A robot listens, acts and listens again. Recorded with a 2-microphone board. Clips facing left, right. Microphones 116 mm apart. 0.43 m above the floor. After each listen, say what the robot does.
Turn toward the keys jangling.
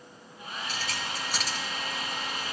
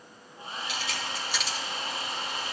Turn 45° left.
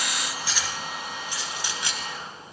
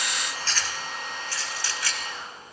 Turn 20° left.
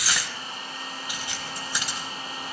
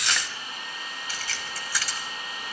Turn 20° left.
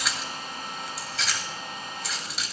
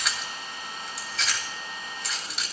Facing the keys jangling.